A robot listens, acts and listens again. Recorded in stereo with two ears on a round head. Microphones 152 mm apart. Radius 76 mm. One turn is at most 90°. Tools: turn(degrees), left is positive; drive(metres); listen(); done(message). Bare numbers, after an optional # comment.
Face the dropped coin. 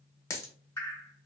# The dropped coin: about 15° left or 165° left.
turn(15)
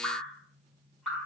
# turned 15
listen()
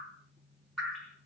done("I heard a dropped coin, but can't make it out now. It was about straight ahead or 150° left.")